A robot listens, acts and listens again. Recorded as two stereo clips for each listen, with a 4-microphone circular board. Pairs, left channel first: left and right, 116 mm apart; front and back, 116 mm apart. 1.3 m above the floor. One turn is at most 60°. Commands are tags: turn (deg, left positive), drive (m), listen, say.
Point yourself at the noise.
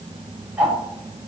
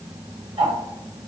<turn deg="-60"/>
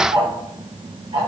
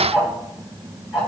<turn deg="-60"/>
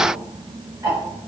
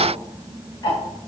<turn deg="-45"/>
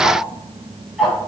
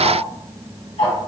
<say>Facing the ticking, 1 to 2 m away.</say>